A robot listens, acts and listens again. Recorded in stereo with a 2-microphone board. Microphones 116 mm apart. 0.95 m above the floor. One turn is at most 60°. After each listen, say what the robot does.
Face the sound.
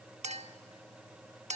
Turn 60° right.
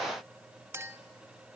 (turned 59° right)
Turn 25° right.
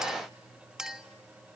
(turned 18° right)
Facing the clink.